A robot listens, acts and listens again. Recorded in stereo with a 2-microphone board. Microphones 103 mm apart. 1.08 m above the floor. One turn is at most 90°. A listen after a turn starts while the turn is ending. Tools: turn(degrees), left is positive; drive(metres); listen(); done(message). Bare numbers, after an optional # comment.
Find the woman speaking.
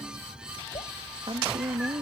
# The woman speaking: about 60° right or 120° right.
turn(-60)
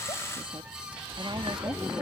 listen()
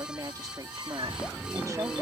# So it is at 35° right.
turn(-35)
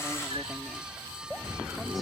listen()
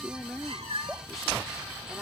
done("Facing the woman speaking.")